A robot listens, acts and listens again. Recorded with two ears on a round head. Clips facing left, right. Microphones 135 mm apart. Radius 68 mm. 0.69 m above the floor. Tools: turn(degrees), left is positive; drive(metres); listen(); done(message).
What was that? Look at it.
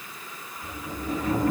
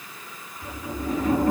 turn(degrees=-30)
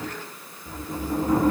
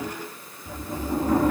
done("Found it: a sliding door, straight ahead.")